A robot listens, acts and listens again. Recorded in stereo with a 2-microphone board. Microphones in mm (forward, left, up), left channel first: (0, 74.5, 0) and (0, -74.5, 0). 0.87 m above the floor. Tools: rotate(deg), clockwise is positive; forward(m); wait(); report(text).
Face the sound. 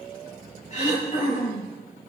rotate(-50)
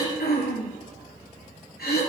rotate(-80)
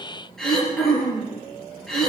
report("Facing the throat clearing.")